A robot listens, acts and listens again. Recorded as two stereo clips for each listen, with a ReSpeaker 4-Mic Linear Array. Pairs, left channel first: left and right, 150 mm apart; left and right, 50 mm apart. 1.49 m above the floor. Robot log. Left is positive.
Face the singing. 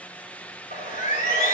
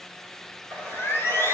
note: The singing: about 55° left or 125° left.
cmd yaw +55
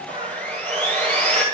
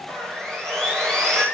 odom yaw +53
note: So it is at 50° left.
cmd yaw +50
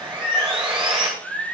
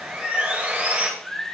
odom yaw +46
end: Facing the singing, 2 to 4 m away.